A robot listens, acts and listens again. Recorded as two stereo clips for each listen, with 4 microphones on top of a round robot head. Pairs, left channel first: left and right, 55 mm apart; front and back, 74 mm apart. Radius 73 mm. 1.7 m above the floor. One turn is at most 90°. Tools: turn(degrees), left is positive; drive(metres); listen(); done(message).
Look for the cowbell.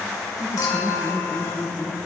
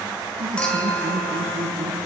listen()
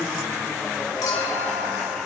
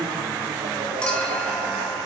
listen()
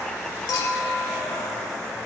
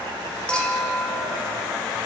done("I can't make out a cowbell, only laughter and a clink.")